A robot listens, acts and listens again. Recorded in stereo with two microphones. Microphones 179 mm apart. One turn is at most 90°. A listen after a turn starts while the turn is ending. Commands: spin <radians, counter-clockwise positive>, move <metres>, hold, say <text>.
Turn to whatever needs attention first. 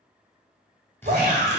spin -1.05
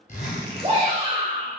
spin -0.61
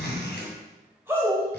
spin -0.26
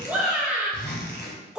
say Facing the shout, 1 to 2 m away.